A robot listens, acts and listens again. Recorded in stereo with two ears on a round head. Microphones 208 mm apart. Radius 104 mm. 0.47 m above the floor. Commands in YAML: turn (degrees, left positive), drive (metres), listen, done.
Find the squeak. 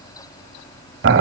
listen: true
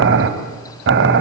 listen: true
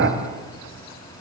done: "I can't make out a squeak, only boiling."